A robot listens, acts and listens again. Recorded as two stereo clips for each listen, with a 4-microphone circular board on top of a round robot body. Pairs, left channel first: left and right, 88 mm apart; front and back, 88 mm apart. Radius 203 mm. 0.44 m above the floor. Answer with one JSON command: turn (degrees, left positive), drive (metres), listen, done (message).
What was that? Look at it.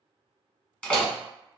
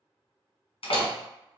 {"turn": 15}
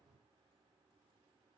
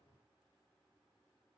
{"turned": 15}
{"done": "I heard a door slam from this way, but can't make it out now."}